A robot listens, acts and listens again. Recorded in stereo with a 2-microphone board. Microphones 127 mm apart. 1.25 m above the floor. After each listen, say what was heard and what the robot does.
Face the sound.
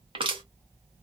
The crushing: about 45° right or 135° right. Turn 45° right.
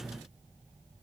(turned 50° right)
Keep listening.
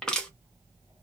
Found it: crushing, straight ahead, under 1 m away.